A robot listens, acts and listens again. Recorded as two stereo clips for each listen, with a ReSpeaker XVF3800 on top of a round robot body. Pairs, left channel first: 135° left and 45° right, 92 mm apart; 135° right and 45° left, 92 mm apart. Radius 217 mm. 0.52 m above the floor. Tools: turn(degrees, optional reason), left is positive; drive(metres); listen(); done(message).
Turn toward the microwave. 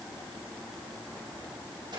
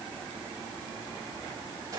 listen()
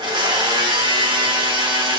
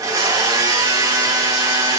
listen()
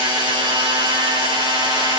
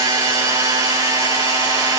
done("I can't make out a microwave, only a blender.")